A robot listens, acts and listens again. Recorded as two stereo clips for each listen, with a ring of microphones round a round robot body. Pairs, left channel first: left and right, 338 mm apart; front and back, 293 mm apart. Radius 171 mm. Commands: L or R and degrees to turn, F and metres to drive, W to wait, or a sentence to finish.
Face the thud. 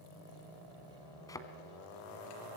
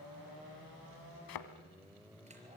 L10
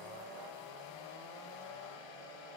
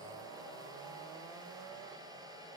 Facing where the thud came from. I can't hear it now.